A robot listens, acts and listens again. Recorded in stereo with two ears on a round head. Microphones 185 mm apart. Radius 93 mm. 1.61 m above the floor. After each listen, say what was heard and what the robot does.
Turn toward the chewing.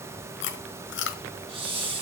The chewing: about 60° left or 120° left. Turn 60° left.
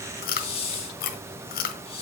So it is at 50° left. Turn 50° left.
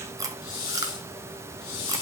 The chewing is now 20° right. Turn 20° right.
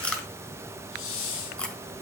Found it: chewing, straight ahead, 1 to 2 m away.